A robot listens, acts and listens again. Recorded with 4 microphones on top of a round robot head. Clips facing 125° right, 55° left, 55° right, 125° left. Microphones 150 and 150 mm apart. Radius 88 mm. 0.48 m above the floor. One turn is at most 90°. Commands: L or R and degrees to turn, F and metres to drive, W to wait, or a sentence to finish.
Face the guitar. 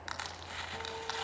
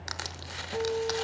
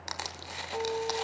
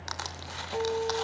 L50
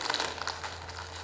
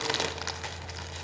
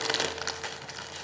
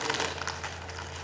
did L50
W
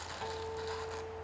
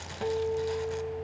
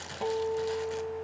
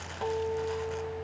L20
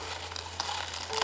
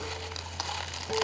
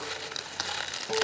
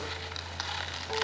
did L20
W
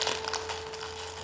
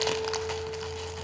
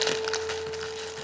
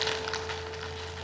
W
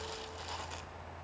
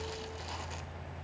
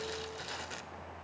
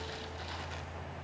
I heard a guitar from this way, but can't make it out now.